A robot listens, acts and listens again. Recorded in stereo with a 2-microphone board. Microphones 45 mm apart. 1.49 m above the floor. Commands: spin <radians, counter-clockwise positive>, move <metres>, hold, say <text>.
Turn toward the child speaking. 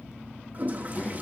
spin 0.35
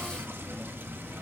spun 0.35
hold
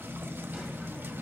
hold
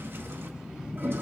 spin -0.26
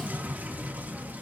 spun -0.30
say Found it: a child speaking, straight ahead.